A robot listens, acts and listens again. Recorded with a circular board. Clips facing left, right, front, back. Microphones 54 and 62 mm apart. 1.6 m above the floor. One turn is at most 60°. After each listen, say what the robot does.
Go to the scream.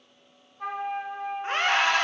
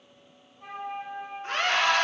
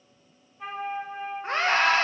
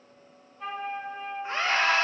Turn 30° left.
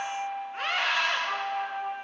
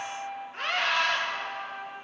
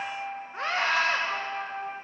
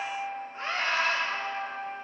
Drive 1.0 m forward.
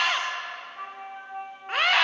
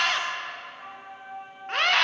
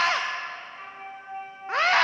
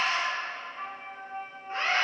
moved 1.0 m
Drive 1.0 m forward.
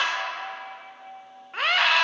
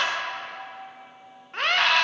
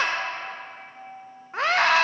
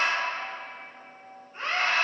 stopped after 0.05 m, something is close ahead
I am next to the scream.